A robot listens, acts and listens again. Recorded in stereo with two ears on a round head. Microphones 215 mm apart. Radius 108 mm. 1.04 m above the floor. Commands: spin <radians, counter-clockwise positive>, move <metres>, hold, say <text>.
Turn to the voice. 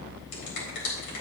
hold
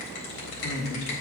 spin 0.87
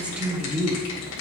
say Facing the woman speaking, 2 to 4 m away.